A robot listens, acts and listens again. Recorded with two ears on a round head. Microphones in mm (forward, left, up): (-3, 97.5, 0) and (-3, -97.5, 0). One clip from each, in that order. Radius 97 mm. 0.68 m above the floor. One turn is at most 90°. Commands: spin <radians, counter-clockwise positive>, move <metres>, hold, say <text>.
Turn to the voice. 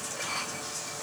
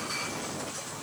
hold
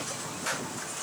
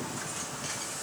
hold
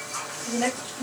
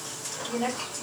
spin 0.70
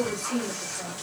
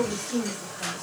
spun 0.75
say Facing the woman speaking.